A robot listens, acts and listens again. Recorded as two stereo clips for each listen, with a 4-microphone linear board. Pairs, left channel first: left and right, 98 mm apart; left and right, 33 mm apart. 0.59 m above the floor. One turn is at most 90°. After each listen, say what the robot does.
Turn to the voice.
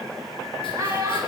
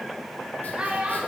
Turn 35° right.
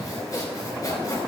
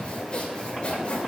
Keep listening.
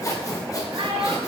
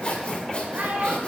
Turn 90° right.
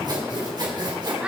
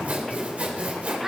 Turn 15° right.
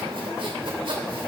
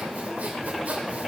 Keep listening.
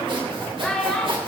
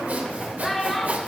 Found it: a child speaking, straight ahead.